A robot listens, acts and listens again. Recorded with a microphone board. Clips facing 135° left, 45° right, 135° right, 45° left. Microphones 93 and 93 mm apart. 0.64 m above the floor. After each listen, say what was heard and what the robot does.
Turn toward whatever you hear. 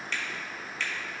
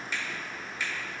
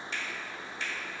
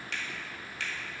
The finger snap: 35° left. Turn 35° left.
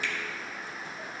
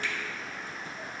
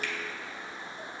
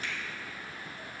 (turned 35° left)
Keep listening.
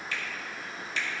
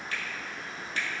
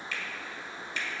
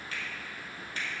Found it: a finger snap, straight ahead, 1 to 2 m away.